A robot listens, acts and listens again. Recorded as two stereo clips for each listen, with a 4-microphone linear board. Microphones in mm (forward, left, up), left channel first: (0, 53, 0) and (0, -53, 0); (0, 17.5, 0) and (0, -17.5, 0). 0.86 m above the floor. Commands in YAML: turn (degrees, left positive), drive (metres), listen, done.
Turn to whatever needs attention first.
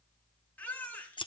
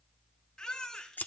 turn: 20
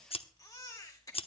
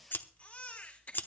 turn: 140
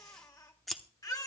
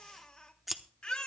turn: 35
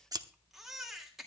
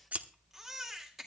done: "Facing the baby crying, 2 to 4 m away."